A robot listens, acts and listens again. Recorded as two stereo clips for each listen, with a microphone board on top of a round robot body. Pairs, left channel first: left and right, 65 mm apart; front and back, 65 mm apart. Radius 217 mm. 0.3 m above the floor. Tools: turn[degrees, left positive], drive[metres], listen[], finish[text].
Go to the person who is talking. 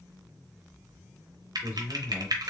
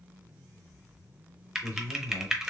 Thought: The man speaking: 20° right.
Action: turn[-20]
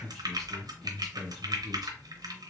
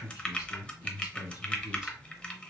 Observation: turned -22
Action: drive[1.0]
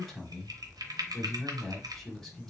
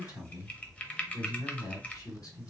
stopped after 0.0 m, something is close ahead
Thought: The man speaking is now 10° left.
Action: turn[10]
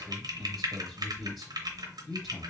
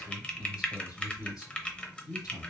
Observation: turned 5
Action: finish[Something is in my way. I am facing the man speaking but have not reached it.]